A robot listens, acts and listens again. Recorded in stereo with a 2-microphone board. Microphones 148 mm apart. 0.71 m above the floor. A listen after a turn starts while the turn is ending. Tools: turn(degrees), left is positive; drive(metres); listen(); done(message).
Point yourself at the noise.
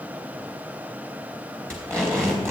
turn(degrees=30)
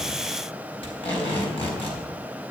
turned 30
turn(degrees=140)
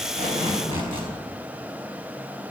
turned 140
turn(degrees=30)
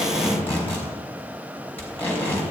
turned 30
turn(degrees=15)
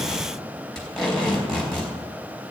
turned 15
done("Facing the tape being pulled.")